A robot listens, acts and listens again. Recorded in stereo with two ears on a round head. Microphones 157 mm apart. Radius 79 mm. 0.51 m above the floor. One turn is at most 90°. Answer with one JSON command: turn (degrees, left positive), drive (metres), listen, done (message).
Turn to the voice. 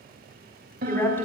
{"turn": 30}
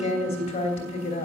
{"turn": 90}
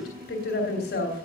{"turn": 70}
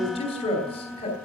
{"turn": 35}
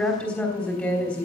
{"turn": 10}
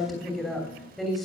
{"done": "Found it: a woman speaking, straight ahead, 2 to 4 m away."}